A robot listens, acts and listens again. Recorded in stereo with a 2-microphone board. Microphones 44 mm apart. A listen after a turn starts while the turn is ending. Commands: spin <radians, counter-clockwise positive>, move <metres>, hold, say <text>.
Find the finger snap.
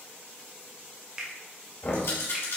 spin -0.35
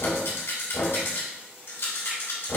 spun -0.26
hold
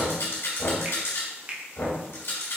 spin -2.53
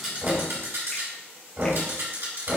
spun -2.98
spin 0.44
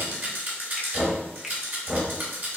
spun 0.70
spin -0.26
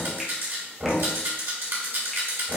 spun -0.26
say Facing where the finger snap came from. I can't hear it now.